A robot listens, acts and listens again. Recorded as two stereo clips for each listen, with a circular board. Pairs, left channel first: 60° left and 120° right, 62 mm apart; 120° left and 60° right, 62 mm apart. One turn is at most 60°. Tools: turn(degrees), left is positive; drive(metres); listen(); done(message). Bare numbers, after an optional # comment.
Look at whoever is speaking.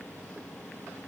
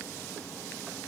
listen()
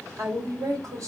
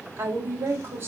# The woman speaking: 110° right.
turn(-60)
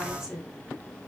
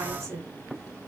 # The woman speaking is now 40° right.
turn(-40)
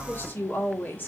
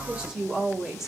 # The woman speaking is now 15° left.
turn(15)
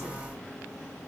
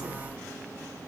listen()
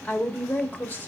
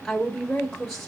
# The woman speaking is now 45° left.
turn(45)
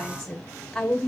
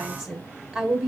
# The woman speaking is now 10° right.
turn(-10)
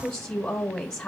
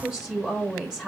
done("Found it: a woman speaking, straight ahead, 1 to 2 m away.")